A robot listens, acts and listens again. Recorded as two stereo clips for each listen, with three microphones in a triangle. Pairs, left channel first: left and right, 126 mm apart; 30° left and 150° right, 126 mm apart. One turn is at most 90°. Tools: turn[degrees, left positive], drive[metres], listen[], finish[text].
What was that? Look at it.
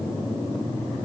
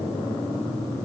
Action: listen[]
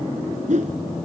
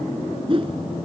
Thought: The whoosh: 105° right.
Action: turn[-90]
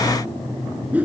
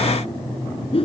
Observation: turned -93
Thought: The whoosh is now 10° right.
Action: turn[-10]
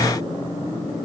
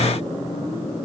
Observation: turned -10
Action: listen[]
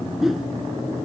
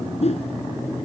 Action: finish[Found it: a whoosh, straight ahead.]